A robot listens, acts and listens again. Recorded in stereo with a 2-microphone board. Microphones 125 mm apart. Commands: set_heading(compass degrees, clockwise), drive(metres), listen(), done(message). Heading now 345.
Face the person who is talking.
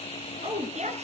set_heading(50)
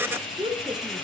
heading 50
set_heading(95)
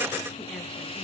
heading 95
listen()
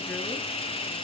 listen()
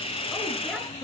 done("Facing where the woman speaking came from. I can't hear it now.")